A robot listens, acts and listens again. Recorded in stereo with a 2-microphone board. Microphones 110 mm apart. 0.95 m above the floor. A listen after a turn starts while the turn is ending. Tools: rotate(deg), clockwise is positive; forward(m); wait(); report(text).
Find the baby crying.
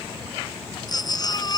rotate(-40)
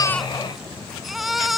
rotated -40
report("Facing the baby crying.")